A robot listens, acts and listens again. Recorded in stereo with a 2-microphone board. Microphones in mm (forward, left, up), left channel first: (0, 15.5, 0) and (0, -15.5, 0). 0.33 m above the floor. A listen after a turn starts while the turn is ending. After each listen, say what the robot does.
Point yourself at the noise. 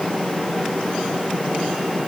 Keep listening.
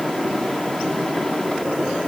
Keep listening.
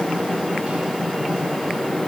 I can't make out anything.